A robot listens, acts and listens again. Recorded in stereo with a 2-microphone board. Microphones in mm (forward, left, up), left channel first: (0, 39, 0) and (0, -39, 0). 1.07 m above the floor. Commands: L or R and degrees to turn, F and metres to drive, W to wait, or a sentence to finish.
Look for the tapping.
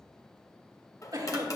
L45
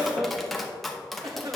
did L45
Found it: tapping, straight ahead, under 1 m away.